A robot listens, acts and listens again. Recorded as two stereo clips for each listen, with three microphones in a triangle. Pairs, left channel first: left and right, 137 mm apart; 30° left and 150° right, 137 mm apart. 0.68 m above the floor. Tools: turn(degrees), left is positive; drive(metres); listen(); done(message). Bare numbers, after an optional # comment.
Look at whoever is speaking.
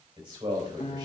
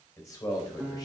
# The man speaking: 35° right.
turn(-35)
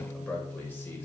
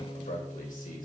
# The man speaking is now 15° left.
turn(15)
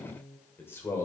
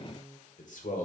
# The man speaking is now 25° left.
turn(25)
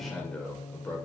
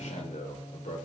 # The man speaking is now 15° left.
turn(15)
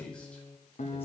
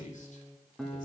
# The man speaking is now 10° left.
turn(10)
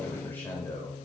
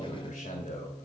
# The man speaking is now 20° left.
turn(20)
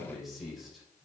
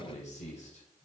done("Found it: a man speaking, straight ahead, 2 to 4 m away.")